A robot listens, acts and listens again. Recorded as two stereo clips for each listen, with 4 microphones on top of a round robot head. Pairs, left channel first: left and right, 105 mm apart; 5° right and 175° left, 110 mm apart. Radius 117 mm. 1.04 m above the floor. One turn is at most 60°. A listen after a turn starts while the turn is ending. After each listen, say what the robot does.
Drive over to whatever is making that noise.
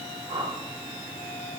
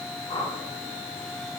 Turn 50° right.
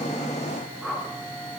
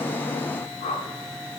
Drive 1.0 m forward.
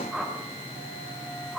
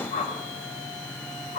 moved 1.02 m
Drive 1.0 m forward.
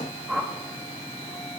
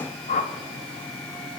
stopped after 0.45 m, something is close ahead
I am next to the whoosh.